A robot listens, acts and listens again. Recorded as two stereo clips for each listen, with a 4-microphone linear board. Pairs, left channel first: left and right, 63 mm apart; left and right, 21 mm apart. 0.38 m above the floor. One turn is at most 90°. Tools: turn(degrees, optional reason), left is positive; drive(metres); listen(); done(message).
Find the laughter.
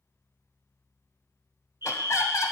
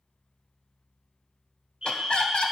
turn(degrees=60, reason="The laughter: about 60° left or 120° left.")
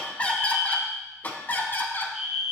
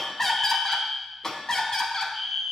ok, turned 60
turn(degrees=35, reason="So it is at 35° left.")
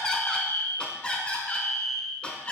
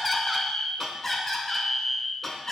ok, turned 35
turn(degrees=15, reason="The laughter is now 15° left.")
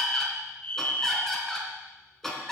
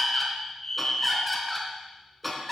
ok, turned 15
done("Facing the laughter.")